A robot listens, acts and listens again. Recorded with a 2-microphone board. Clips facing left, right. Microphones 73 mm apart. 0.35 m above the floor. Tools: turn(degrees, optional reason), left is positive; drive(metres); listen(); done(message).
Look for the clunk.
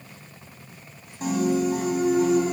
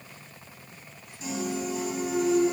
turn(degrees=30, reason="The clunk: about 30° left or 150° left.")
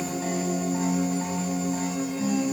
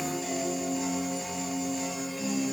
listen()
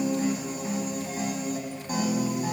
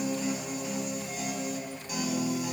done("I heard a clunk, but can't make it out now. It was about straight ahead or 120° left.")